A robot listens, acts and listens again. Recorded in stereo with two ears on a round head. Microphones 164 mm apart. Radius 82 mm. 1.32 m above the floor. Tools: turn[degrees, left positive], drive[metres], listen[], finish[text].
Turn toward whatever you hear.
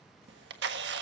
Thought: The camera shutter: about 70° right or 110° right.
Action: turn[-70]
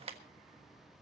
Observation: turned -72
Thought: So it is at 35° right.
Action: turn[-35]
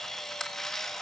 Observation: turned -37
Action: finish[Found it: a camera shutter, straight ahead, 1 to 2 m away.]